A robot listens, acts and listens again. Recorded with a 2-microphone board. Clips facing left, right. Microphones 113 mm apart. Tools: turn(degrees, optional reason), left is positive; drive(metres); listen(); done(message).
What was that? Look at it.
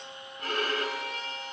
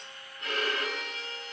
turn(degrees=50, reason="The violin: about 50° left or 130° left.")
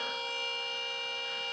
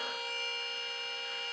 done("Found it: a violin, straight ahead, over 4 m away.")